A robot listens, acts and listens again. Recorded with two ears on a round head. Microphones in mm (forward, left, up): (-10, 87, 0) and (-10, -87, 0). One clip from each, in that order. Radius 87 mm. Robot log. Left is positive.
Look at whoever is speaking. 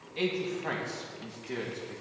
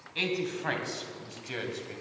note: The man speaking: about 65° right or 115° right.
cmd yaw -65
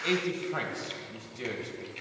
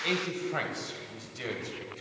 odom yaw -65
note: So it is at 30° right.
cmd yaw -30
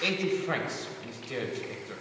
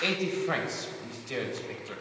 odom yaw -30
note: The man speaking is now 20° right.
cmd yaw -20
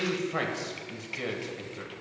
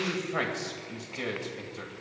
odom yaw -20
end: Found it: a man speaking, straight ahead.